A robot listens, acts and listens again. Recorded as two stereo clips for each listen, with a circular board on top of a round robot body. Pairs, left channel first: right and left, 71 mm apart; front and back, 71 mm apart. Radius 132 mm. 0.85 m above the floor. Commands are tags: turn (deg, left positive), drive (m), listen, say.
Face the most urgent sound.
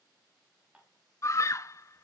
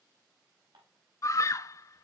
<turn deg="-45"/>
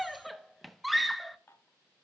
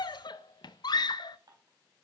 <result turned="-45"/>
<say>Found it: a scream, straight ahead, 1 to 2 m away.</say>